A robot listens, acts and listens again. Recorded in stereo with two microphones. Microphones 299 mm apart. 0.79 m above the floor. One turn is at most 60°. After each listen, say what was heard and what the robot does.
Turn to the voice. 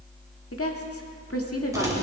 The woman speaking: about 50° left or 130° left. Turn 50° left.
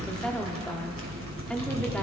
Facing the woman speaking.